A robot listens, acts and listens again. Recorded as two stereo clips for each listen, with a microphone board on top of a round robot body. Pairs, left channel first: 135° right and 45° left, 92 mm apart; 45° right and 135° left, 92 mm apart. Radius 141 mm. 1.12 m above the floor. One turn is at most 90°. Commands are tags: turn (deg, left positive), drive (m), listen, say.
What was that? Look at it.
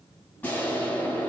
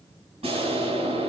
<turn deg="90"/>
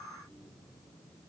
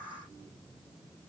<turn deg="65"/>
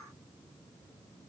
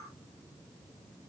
<say>Facing where the explosion came from. I can't hear it now.</say>